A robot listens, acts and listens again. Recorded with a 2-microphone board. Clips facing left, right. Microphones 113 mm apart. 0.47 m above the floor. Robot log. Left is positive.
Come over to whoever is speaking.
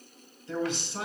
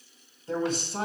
note: The man speaking: about 45° right or 135° right.
cmd yaw -45
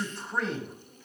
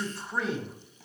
cmd fwd 1.0
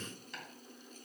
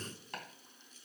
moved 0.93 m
cmd idle
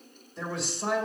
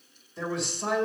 cmd fwd 1.0
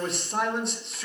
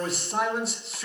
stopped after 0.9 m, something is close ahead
end: I am next to the man speaking.